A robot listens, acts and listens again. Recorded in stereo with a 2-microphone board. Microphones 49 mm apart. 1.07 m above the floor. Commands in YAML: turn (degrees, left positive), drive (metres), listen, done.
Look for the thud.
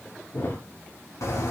turn: 65
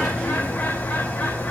listen: true
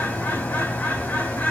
done: "I heard a thud, but can't make it out now. It was about straight ahead or 50° left."